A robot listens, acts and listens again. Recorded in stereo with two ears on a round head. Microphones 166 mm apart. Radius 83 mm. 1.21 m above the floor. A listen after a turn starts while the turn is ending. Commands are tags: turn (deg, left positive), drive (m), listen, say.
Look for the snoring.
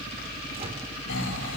<turn deg="70"/>
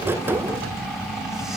<say>Facing the snoring.</say>